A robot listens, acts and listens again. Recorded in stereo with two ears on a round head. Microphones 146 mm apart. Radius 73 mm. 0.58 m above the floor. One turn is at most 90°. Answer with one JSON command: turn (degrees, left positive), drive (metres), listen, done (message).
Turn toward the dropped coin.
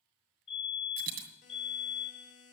{"turn": -60}
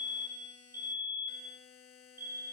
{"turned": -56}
{"listen": true}
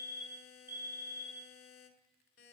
{"done": "I heard a dropped coin, but can't make it out now. It was about 5° right or 60° right."}